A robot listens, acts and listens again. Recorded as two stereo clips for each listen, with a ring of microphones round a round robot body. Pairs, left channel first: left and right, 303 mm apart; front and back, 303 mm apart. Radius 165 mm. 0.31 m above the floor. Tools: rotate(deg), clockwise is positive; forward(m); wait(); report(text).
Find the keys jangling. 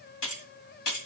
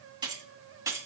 rotate(-100)
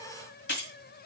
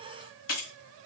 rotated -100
rotate(-35)
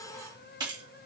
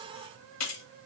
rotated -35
rotate(15)
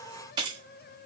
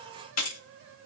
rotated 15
rotate(20)
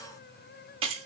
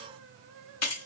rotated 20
rotate(20)
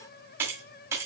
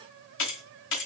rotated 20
rotate(10)
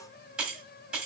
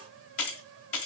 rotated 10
report("Facing the keys jangling.")